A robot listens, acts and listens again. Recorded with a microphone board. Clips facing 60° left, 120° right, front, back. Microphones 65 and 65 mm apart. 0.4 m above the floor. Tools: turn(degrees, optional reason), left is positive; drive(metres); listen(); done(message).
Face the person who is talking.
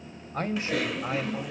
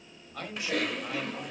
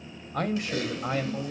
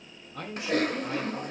turn(degrees=15, reason="The man speaking: 15° left.")
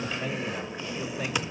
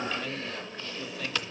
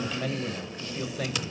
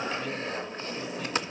done("Found it: a man speaking, straight ahead.")